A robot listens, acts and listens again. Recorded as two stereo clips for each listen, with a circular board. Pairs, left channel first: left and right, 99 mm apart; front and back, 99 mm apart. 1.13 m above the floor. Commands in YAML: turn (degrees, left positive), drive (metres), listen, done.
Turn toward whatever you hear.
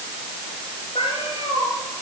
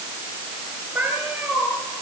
turn: 110
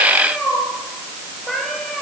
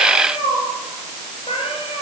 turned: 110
done: "Facing the cat meowing, over 4 m away."